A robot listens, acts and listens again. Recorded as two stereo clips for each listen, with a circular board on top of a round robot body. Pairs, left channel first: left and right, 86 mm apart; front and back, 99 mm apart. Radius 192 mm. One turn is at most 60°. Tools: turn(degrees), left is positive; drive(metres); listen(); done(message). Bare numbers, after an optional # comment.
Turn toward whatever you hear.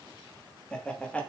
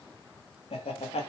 # The laughter: 15° left.
turn(15)
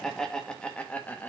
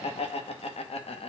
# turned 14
# The laughter is now 20° left.
turn(20)
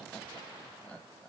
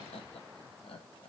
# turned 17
# The laughter is now 20° left.
turn(20)
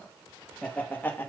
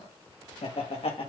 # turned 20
# The laughter is now 25° left.
turn(25)
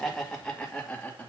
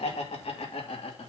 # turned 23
# The laughter is now 15° left.
turn(15)
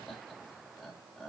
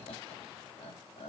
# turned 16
done("Facing the laughter, 2 to 4 m away.")